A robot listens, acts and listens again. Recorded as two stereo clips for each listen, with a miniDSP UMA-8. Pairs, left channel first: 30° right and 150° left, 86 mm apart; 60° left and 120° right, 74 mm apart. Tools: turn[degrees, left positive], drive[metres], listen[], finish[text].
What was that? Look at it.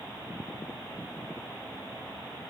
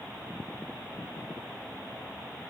Action: listen[]
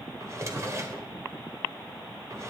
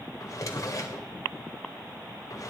Thought: The drawer: 100° left.
Action: turn[100]
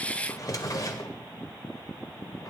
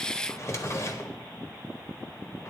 Thought: The drawer is now 15° left.
Action: turn[15]
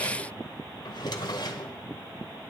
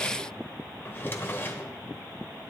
Action: finish[Found it: a drawer, straight ahead.]